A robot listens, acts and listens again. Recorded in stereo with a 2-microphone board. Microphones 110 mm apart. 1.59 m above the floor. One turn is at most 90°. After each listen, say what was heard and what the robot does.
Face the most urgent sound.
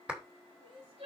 The crying: about 60° right or 120° right. Turn 60° right.
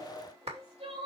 So it is at 60° right. Turn 60° right.
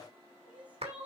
The crying is now 15° right. Turn 15° right.
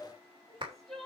Facing the crying.